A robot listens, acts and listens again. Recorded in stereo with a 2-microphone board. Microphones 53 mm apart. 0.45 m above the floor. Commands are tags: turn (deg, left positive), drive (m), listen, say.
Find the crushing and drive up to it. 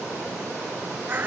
<listen/>
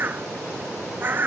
<listen/>
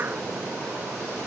<say>I can't make out crushing, only a bird.</say>